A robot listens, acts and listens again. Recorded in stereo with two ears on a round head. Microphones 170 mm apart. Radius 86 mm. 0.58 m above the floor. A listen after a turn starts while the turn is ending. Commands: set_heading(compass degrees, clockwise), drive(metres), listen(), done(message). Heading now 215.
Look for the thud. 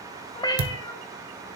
set_heading(285)
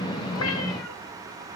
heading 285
listen()
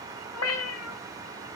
done("I heard a thud, but can't make it out now. It was about straight ahead or 40° right.")